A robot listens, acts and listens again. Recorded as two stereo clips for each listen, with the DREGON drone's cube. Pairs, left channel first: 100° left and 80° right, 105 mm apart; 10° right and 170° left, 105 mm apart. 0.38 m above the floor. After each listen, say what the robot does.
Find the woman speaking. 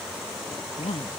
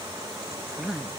Turn 85° left.
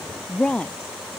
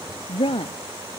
Turn 20° left.
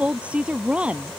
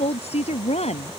Facing the woman speaking.